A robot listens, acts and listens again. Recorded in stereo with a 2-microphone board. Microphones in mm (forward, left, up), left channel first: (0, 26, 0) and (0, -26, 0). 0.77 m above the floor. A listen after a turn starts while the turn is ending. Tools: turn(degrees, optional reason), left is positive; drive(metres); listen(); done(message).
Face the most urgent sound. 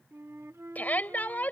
turn(degrees=35, reason="The shout: about 35° left or 145° left.")
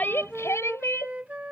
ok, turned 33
turn(degrees=115, reason="So it is at 115° left.")
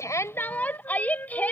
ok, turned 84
turn(degrees=30, reason="The shout is now 30° left.")
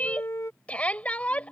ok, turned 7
turn(degrees=25, reason="The shout is now 25° left.")
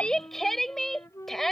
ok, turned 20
done("Facing the shout.")